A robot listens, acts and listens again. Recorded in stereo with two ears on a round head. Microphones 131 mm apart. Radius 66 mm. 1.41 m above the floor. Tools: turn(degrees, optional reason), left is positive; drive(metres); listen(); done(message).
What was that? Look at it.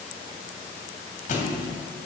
turn(degrees=55, reason="The thud: about 55° left or 125° left.")
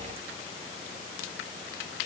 listen()
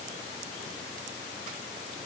done("I heard a thud, but can't make it out now. It was about straight ahead or 70° left.")